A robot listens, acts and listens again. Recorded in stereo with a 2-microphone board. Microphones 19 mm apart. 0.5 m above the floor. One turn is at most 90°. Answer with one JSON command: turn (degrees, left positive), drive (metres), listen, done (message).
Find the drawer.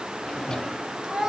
{"turn": 40}
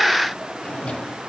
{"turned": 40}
{"turn": 90}
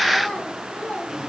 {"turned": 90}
{"listen": true}
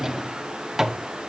{"turn": -15}
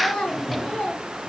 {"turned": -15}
{"done": "Facing the drawer."}